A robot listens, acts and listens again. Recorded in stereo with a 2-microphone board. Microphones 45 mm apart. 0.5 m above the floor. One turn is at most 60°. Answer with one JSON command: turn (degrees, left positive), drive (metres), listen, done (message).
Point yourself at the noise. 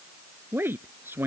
{"turn": -60}
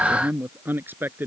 {"turn": -55}
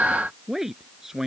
{"turn": -10}
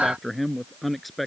{"done": "Facing the man speaking."}